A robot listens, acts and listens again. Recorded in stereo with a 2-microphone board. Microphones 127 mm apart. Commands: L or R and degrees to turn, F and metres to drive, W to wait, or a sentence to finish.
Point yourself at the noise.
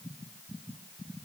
W
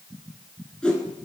L30
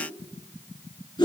L140
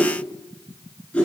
L10
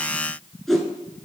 Found it: a whoosh, straight ahead.